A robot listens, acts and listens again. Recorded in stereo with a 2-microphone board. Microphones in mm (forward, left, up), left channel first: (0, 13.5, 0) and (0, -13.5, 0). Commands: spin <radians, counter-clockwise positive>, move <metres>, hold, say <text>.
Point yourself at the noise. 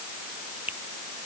spin -1.57
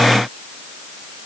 hold
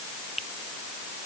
spin -0.17
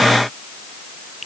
say Found it: a finger snap, straight ahead.